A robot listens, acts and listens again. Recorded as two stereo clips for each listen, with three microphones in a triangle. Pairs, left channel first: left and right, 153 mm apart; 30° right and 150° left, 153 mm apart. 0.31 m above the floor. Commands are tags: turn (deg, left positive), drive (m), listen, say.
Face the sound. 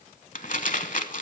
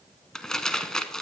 <turn deg="55"/>
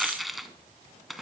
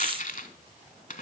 <say>Facing the crumpling.</say>